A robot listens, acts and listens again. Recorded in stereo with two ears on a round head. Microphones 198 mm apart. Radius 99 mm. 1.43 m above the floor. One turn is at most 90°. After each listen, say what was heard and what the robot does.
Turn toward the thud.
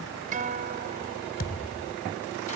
The thud: about 40° left or 140° left. Turn 40° left.
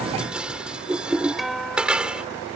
Keep listening.
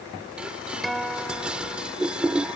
I heard a thud, but can't make it out now. It was about straight ahead or 100° left.